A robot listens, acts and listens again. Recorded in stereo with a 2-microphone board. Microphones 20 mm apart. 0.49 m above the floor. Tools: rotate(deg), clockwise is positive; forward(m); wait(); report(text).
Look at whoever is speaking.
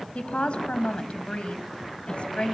rotate(-75)
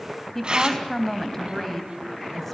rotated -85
rotate(-10)
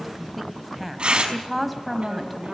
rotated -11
report("Found it: a woman speaking, straight ahead, 2 to 4 m away.")